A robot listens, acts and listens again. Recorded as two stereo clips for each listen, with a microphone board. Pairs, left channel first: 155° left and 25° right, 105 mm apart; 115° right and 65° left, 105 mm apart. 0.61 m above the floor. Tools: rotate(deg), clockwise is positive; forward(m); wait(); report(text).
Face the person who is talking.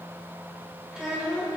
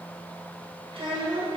rotate(-60)
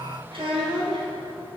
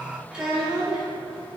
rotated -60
rotate(15)
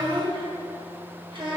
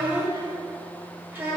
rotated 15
report("Found it: a child speaking, straight ahead.")